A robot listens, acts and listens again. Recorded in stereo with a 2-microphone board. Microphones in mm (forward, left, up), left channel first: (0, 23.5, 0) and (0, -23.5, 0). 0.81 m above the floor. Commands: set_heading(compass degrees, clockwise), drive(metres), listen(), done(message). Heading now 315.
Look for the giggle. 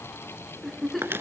set_heading(285)
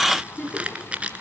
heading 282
set_heading(137)
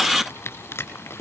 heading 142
listen()
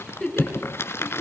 done("Found it: a giggle, straight ahead, over 4 m away.")